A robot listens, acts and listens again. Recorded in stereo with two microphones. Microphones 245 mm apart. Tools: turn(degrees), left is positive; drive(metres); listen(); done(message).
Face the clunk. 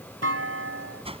turn(degrees=-65)
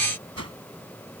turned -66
listen()
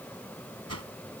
done("I heard a clunk, but can't make it out now. It was about 5° left or 50° right.")